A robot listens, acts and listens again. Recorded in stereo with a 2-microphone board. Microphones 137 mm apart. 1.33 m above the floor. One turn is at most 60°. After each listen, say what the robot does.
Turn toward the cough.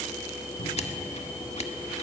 Keep listening.
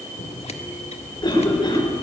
Turn 30° left.
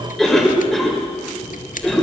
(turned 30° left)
Facing the cough.